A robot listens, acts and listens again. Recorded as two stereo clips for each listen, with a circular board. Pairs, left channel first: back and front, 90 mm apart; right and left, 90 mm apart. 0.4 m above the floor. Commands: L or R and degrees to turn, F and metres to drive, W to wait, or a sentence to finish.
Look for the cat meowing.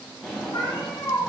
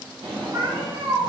L135
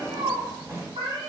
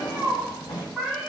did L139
Facing the cat meowing, 1 to 2 m away.